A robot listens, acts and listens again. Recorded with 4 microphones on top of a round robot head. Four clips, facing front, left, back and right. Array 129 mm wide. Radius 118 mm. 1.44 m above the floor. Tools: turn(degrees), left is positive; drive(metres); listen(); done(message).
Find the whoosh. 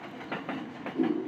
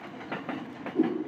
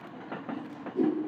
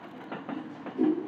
turn(degrees=75)
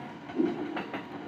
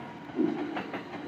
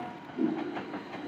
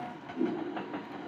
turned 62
turn(degrees=10)
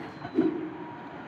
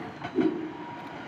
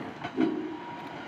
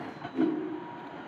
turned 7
done("Found it: a whoosh, straight ahead, 1 to 2 m away.")